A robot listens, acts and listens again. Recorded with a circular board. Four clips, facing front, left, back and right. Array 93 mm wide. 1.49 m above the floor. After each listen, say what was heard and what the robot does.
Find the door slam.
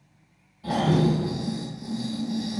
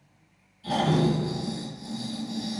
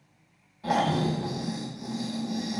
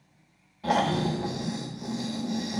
The door slam: 40° left. Turn 40° left.
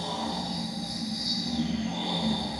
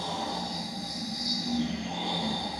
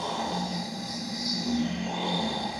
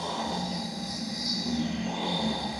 Facing where the door slam came from. I can't hear it now.